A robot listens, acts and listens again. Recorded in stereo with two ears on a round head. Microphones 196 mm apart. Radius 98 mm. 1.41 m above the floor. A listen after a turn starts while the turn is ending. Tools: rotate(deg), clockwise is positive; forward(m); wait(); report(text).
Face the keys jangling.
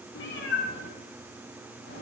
wait()
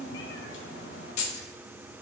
rotate(-70)
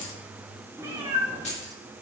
rotate(-30)
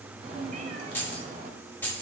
rotate(-10)
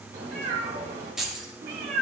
report("Found it: keys jangling, straight ahead, 1 to 2 m away.")